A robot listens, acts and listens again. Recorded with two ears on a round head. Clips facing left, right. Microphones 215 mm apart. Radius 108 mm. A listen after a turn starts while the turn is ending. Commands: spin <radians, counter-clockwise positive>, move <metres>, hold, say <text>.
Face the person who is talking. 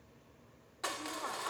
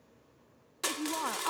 spin -1.05
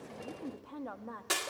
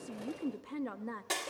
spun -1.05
spin -0.61
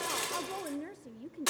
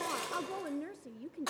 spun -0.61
say Found it: a woman speaking, straight ahead, 1 to 2 m away.